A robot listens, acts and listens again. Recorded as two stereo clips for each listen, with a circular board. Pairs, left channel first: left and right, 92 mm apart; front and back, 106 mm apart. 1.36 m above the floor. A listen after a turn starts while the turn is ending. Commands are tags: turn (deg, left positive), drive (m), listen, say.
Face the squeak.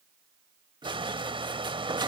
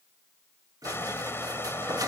<turn deg="-125"/>
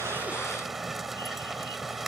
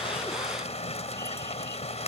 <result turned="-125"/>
<listen/>
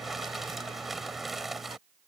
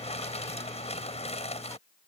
<listen/>
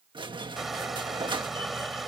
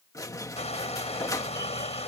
<turn deg="-60"/>
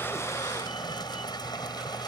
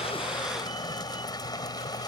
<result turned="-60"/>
<listen/>
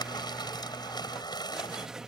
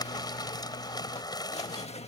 <say>Facing the squeak.</say>